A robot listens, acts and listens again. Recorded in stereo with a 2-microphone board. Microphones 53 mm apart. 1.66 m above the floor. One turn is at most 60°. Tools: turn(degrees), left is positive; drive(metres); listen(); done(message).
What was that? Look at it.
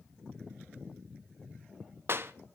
turn(degrees=-50)
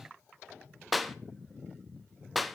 done("Facing the clap, under 1 m away.")